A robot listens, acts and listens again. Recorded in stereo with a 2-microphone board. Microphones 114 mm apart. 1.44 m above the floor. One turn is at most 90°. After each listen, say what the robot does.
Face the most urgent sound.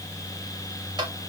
Keep listening.
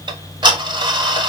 Keep listening.
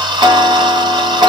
I can't make out anything urgent, only ticking.